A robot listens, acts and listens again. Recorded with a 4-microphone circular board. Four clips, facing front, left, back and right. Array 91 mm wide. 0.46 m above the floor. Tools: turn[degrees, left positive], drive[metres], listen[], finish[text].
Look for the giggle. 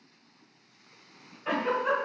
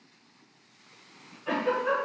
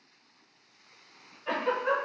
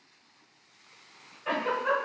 Thought: The giggle: 40° right.
Action: turn[-40]
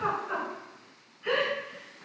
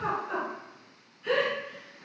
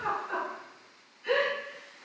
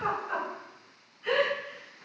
Thought: The giggle is now 15° right.
Action: turn[-15]
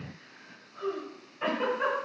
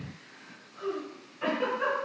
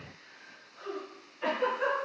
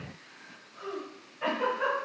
Action: finish[Found it: a giggle, straight ahead, 1 to 2 m away.]